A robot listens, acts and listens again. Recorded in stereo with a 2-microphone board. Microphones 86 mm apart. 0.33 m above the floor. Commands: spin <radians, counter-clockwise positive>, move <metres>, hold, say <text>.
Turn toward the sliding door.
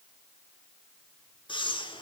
hold
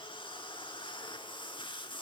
hold
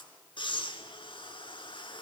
say I can't make out a sliding door to turn to.